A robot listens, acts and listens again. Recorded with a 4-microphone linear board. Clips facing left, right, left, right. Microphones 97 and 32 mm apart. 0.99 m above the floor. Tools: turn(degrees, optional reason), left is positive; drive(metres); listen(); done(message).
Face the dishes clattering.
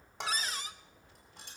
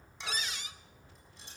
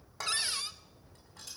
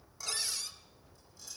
turn(degrees=90)
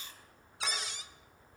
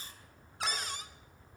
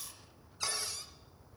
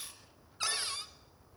listen()
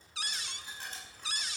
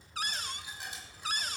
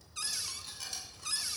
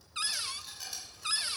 turn(degrees=-10, reason="The dishes clattering is now 10° right.")
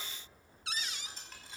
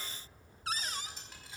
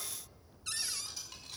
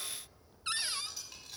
done("Found it: dishes clattering, straight ahead, over 4 m away.")